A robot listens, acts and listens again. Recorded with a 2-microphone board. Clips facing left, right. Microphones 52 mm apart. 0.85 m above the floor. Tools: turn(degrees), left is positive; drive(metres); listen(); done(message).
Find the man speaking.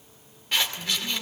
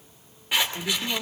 turn(degrees=-70)
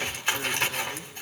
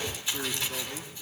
listen()
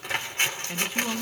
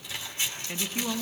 done("Found it: a man speaking, straight ahead.")